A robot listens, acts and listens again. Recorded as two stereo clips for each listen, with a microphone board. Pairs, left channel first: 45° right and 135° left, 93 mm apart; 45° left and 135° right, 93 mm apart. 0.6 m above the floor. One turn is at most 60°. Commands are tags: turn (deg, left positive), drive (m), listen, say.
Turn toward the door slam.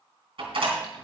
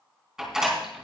<turn deg="60"/>
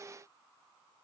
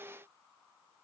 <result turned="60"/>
<turn deg="60"/>
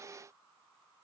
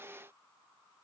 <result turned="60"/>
<turn deg="20"/>
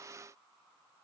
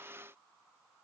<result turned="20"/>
<say>Facing where the door slam came from. I can't hear it now.</say>